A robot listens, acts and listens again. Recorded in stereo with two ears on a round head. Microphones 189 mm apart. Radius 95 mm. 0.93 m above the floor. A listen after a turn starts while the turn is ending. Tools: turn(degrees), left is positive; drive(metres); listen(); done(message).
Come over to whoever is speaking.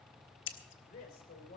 turn(degrees=40)
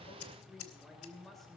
drive(metres=1.0)
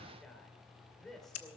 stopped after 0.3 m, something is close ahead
done("Blocked. The woman speaking is further on, straight ahead.")